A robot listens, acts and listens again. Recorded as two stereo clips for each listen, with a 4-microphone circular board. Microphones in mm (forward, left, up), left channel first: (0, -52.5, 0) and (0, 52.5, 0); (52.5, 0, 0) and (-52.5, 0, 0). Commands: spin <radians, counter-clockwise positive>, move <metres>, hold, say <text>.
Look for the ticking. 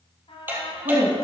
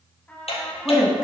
spin 0.35
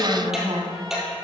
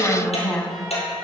say Facing the ticking.